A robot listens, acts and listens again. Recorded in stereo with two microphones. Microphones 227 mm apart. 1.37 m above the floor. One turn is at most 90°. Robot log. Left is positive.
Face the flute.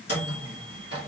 cmd idle
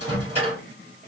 cmd idle
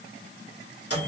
end: I can't make out a flute, only a microwave.